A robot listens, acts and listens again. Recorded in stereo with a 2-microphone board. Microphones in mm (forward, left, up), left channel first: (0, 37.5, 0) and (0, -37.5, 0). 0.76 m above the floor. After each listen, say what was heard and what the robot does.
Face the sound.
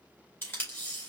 The tape being pulled: about 30° left or 150° left. Turn 30° left.
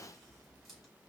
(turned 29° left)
Keep listening.
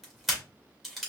Found it: tape being pulled, straight ahead.